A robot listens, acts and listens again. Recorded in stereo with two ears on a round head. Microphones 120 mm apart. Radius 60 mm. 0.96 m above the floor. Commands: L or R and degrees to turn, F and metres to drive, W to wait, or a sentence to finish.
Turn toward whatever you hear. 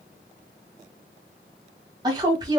R30
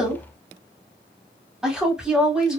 Facing the woman speaking, 1 to 2 m away.